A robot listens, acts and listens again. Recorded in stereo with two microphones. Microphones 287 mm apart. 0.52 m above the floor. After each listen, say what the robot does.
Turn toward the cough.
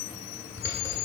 Keep listening.
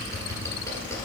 Keep listening.
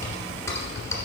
I can't make out a cough, only typing on a keyboard.